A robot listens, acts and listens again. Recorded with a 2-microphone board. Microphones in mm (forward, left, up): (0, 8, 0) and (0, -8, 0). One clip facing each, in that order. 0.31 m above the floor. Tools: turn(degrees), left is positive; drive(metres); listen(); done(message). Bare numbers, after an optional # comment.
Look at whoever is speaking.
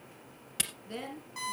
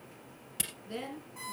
turn(30)
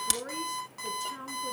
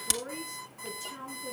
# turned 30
# So it is at 165° left.
turn(165)
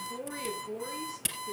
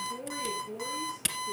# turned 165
# The woman speaking is now 25° left.
turn(25)
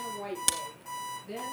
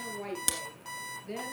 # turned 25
# The woman speaking is now 15° right.
turn(-15)
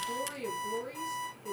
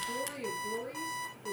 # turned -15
done("Found it: a woman speaking, straight ahead, over 4 m away.")